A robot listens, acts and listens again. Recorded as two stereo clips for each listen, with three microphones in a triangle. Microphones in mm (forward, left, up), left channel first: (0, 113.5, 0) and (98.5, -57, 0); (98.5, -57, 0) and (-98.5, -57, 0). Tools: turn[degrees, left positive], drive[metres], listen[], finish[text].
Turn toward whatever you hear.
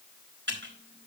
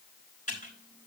Thought: The typing on a keyboard: 50° right.
Action: turn[-50]
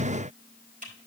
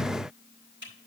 Thought: The typing on a keyboard is now 15° right.
Action: turn[-15]
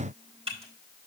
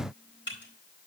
Action: finish[Facing the typing on a keyboard, over 4 m away.]